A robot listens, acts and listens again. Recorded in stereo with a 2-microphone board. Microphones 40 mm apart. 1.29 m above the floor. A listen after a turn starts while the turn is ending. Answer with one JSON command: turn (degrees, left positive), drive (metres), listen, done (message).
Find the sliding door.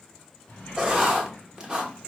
{"turn": 35}
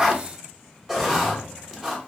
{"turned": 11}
{"turn": 25}
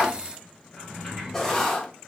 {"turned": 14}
{"turn": 10}
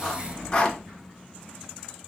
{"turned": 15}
{"done": "Found it: a sliding door, straight ahead, 2 to 4 m away."}